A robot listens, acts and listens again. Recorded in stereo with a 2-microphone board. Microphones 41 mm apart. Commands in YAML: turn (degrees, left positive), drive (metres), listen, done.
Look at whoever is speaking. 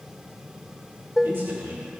turn: -90
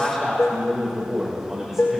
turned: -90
turn: -10
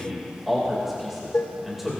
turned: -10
done: "Facing the man speaking, 2 to 4 m away."